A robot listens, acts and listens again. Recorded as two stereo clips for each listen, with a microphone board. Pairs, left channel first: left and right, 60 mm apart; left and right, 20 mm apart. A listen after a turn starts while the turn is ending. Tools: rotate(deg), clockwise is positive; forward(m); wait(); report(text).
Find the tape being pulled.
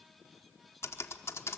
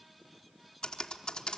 wait()
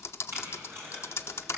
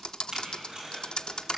rotate(45)
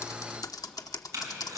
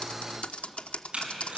rotate(90)
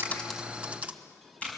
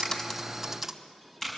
rotate(-20)
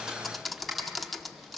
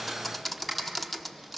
report("Found it: tape being pulled, straight ahead.")